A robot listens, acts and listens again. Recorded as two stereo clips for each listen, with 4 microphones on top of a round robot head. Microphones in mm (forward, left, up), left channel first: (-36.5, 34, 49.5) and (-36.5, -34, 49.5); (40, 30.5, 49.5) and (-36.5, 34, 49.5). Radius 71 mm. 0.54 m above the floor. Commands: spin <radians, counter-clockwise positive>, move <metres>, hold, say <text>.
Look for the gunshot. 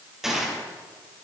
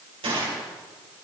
spin -3.05
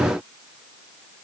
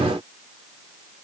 say Facing where the gunshot came from. I can't hear it now.